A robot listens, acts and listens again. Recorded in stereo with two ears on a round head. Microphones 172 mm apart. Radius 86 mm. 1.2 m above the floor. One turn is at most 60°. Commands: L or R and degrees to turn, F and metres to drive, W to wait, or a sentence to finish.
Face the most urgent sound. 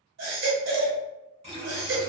R60
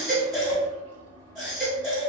Found it: a baby crying, straight ahead.